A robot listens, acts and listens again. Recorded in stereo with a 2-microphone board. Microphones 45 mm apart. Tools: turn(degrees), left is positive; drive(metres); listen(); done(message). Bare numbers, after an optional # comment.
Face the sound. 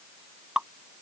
# The dripping: about 20° right or 160° right.
turn(-20)
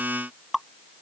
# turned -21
done("Found it: dripping, straight ahead.")